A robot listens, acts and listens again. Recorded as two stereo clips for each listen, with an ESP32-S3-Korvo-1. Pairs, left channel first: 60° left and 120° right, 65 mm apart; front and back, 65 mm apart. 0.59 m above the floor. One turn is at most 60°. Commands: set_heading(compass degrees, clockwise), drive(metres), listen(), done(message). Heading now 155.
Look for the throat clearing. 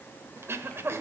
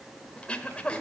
set_heading(215)
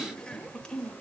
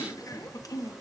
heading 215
set_heading(230)
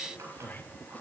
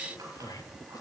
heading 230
done("Found it: throat clearing, straight ahead, 1 to 2 m away.")